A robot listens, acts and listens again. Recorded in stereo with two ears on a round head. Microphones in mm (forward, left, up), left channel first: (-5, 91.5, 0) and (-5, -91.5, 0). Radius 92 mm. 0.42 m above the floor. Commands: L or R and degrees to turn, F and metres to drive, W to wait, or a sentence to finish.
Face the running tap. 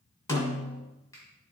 W
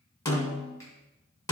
W
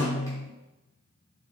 I can't make out a running tap to turn to.